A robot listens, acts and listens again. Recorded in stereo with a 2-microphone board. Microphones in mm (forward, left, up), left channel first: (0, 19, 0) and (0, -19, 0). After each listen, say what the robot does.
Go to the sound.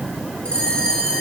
Turn 25° left.
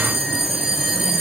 Drive 1.0 m forward.
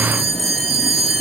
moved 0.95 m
Drive 1.0 m forward.
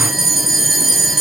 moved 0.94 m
Drive 1.0 m forward.
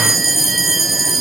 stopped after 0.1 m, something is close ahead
Arrived at the bell, straight ahead.